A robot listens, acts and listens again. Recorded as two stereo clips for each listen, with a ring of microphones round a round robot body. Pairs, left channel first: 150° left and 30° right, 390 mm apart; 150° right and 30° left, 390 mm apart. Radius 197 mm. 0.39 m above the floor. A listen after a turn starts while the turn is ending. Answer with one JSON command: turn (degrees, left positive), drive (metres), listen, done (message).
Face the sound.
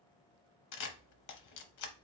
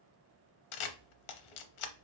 {"turn": -165}
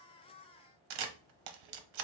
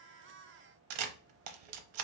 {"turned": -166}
{"done": "Facing the camera shutter, under 1 m away."}